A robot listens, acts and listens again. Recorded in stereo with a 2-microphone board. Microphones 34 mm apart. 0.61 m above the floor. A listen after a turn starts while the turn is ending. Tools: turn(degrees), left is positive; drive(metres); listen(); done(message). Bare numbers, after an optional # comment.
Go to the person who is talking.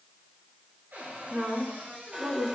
# The woman speaking: about 60° right or 120° right.
turn(-60)
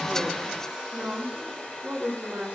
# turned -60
# So it is at 60° right.
turn(-60)
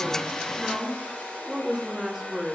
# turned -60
drive(1.0)
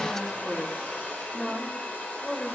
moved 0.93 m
# The woman speaking is now 10° left.
turn(10)
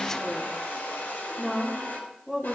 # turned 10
drive(1.0)
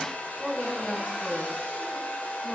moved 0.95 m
drive(1.0)
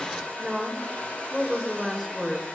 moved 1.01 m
drive(1.0)
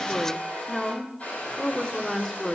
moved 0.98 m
# The woman speaking is now 10° left.
turn(10)
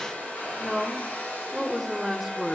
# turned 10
drive(1.0)
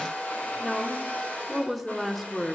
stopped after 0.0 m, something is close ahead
done("Arrived at the woman speaking, straight ahead.")